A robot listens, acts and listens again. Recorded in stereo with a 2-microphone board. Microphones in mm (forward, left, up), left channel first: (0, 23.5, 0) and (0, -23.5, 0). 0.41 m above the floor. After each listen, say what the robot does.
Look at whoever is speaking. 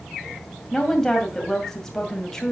Turn 30° left.
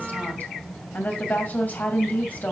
Turn 140° left.
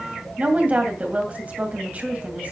Turn 40° right.
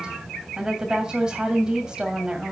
Turn 20° right.
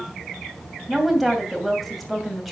Facing the woman speaking.